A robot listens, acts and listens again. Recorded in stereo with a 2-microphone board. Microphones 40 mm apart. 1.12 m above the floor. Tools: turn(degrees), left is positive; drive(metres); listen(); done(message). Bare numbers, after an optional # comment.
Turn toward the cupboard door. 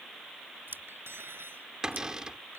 # The cupboard door: about 15° right or 165° right.
turn(-15)
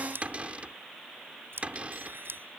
# So it is at 145° right.
turn(-145)
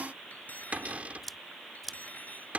# The cupboard door is now 40° right.
turn(-40)
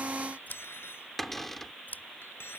done("Found it: a cupboard door, straight ahead.")